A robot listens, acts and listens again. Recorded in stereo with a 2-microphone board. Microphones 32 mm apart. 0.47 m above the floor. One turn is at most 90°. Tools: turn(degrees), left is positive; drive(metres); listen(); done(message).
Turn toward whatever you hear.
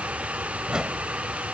turn(degrees=-25)
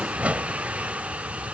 turn(degrees=-90)
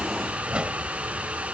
turn(degrees=-40)
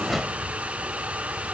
done("Found it: a whoosh, straight ahead.")